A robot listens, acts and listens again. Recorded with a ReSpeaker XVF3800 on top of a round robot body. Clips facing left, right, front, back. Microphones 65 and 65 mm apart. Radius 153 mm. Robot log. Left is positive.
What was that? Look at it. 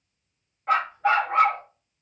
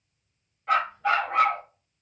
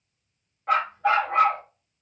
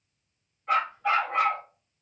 note: The dog barking: 40° left.
cmd yaw +40
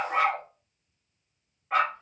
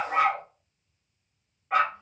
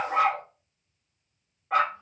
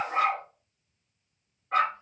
end: Found it: a dog barking, straight ahead, 2 to 4 m away.